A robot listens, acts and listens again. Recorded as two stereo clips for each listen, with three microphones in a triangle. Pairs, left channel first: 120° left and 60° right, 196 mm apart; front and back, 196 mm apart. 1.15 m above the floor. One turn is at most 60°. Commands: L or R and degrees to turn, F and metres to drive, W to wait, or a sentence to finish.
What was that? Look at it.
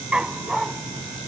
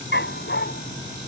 L30
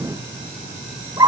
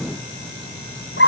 L10
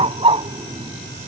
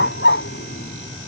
Facing the dog barking.